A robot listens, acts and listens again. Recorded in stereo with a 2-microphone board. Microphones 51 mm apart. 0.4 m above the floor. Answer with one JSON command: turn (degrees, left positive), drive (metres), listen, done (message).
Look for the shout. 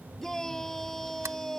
{"turn": 30}
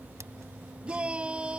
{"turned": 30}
{"turn": -20}
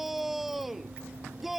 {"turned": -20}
{"done": "Found it: a shout, straight ahead."}